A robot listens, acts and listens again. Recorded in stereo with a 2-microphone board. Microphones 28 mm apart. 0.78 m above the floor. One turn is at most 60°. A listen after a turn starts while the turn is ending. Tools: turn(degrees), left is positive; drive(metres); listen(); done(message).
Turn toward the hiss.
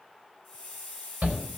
turn(degrees=30)
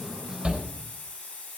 turn(degrees=60)
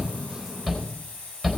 turn(degrees=60)
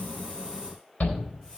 turn(degrees=20)
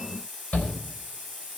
done("Facing the hiss.")